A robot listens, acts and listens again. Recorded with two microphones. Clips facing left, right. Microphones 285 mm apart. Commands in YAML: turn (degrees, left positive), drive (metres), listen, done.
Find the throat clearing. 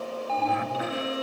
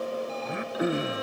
turn: -55
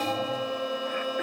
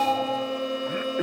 turn: -60
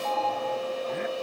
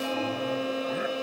listen: true
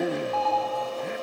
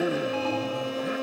done: "Facing the throat clearing."